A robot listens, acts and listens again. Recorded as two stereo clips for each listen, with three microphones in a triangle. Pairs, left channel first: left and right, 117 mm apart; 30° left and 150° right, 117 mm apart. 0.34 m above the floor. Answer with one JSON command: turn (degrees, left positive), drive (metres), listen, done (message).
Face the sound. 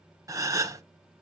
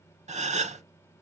{"turn": -155}
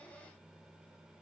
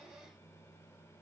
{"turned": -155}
{"done": "I heard a gasp from this way, but can't make it out now."}